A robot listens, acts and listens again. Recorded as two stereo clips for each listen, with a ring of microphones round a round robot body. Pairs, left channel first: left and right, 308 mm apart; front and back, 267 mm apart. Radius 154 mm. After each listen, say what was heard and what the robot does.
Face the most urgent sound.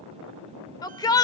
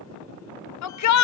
The shout: 10° left. Turn 10° left.
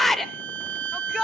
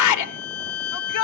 Found it: a shout, straight ahead, 1 to 2 m away.